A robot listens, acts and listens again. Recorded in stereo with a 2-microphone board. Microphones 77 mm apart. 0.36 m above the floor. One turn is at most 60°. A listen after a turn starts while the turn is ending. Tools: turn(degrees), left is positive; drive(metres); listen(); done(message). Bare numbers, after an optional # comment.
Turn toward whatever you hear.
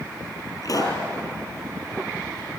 # The pop: about 55° left or 125° left.
turn(55)
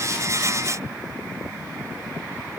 listen()
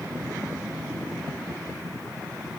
done("I heard a pop, but can't make it out now. It was about straight ahead or 70° left.")